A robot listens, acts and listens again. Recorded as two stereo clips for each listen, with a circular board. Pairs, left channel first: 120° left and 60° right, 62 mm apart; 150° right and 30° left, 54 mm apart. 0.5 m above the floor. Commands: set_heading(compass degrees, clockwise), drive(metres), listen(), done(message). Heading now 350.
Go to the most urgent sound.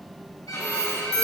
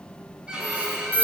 set_heading(85)
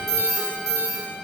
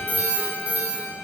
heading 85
set_heading(110)
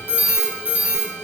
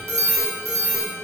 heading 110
drive(1.0)
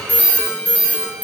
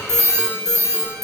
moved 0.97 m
drive(1.0)
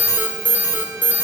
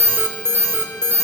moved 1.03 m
drive(1.0)
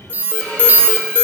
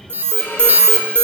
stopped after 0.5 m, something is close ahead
set_heading(120)
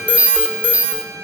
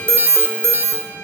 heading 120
done("I am next to the alarm.")